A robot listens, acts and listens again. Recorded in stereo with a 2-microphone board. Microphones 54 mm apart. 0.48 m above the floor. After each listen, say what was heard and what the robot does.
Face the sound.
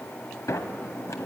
Turn 90° left.
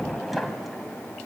Found it: a sliding door, straight ahead.